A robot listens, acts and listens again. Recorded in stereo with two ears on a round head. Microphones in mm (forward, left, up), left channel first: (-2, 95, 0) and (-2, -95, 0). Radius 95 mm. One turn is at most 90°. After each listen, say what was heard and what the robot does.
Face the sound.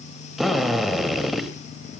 Turn 30° left.
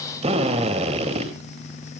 So it is at 30° right. Turn 30° right.
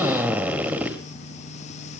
The drill is now 10° right. Turn 10° right.
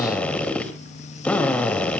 Facing the drill, 2 to 4 m away.